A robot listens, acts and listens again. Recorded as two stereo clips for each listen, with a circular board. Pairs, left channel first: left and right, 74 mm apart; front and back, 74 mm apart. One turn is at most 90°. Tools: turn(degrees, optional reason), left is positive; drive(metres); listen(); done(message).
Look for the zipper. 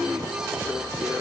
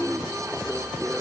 listen()
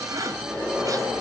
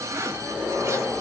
turn(degrees=-90, reason="The zipper: 130° right.")
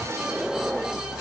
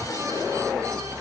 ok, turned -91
turn(degrees=-35, reason="Nothing new. It was at 35° right.")
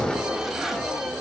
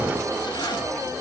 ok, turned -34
listen()
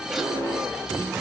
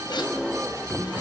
done("Facing where the zipper came from. I can't hear it now.")